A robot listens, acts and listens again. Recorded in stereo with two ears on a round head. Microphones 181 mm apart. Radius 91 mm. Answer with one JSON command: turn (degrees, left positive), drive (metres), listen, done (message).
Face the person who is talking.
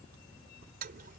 {"listen": true}
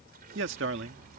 {"turn": -60}
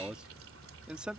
{"done": "Facing the man speaking."}